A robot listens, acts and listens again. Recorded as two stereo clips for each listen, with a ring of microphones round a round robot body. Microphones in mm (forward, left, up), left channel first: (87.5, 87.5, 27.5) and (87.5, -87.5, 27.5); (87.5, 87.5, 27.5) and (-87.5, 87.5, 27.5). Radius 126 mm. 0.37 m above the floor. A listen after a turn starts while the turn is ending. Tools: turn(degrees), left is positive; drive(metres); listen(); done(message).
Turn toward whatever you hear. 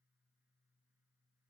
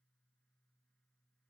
listen()
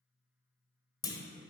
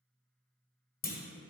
turn(degrees=25)
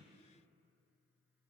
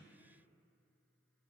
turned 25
done("Facing where the clunk came from. I can't hear it now.")